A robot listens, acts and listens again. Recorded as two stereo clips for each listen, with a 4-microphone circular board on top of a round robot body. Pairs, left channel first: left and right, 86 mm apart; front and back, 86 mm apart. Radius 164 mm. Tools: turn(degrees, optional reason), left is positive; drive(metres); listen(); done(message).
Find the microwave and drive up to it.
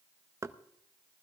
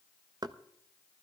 listen()
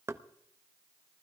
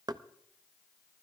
listen()
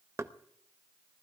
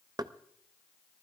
done("I can't make out a microwave to turn to.")